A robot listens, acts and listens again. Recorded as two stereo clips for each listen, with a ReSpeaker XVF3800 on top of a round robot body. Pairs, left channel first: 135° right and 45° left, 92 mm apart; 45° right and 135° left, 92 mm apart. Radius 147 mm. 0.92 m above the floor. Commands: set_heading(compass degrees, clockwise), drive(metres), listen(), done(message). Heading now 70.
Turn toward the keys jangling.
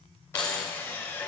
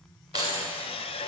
set_heading(245)
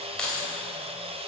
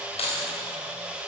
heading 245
set_heading(300)
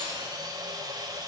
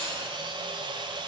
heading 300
listen()
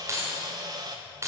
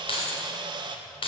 set_heading(315)
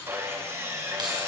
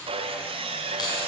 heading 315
done("Facing the keys jangling, 2 to 4 m away.")